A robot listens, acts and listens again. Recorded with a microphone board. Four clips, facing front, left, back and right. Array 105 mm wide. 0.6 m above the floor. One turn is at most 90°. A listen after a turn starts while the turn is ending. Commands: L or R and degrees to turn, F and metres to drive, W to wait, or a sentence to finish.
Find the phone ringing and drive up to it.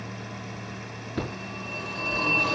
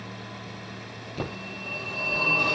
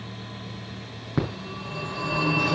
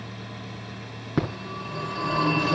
R90
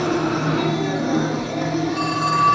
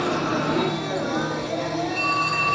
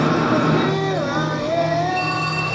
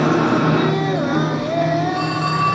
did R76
R50
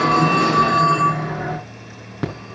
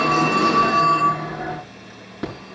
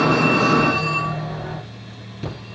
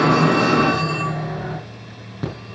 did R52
F1.0
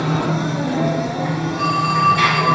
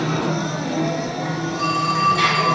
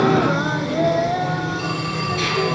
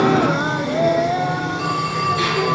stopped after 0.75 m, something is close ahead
L10
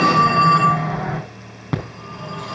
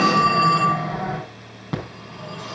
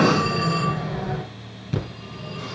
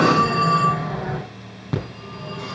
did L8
Blocked. The phone ringing is further on, straight ahead.